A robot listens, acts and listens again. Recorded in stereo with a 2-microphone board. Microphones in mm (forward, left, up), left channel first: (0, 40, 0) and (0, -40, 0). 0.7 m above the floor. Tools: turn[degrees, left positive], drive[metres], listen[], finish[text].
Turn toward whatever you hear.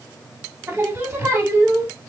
Thought: The singing: about 30° right or 150° right.
Action: turn[-30]
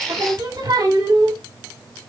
Thought: So it is at 115° right.
Action: turn[-115]
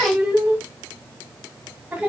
Thought: The singing is now 20° right.
Action: turn[-20]
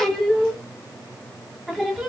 Action: finish[Facing the singing.]